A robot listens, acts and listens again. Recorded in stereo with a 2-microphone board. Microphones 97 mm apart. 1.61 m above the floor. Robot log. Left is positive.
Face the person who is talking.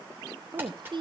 note: The woman speaking: about 50° right or 130° right.
cmd yaw -50
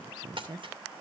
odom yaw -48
note: So it is at 70° right.
cmd yaw -70
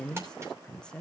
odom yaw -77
note: The woman speaking is now 10° left.
cmd yaw +10
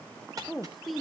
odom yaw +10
end: Found it: a woman speaking, straight ahead.